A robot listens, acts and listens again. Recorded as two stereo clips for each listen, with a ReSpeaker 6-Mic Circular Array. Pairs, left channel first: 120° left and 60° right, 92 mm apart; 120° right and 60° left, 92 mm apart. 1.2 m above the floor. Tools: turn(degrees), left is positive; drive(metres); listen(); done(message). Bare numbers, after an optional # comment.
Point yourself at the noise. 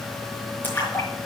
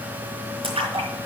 # The splash: 50° left.
turn(50)
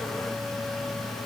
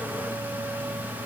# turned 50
done("Facing where the splash came from. I can't hear it now.")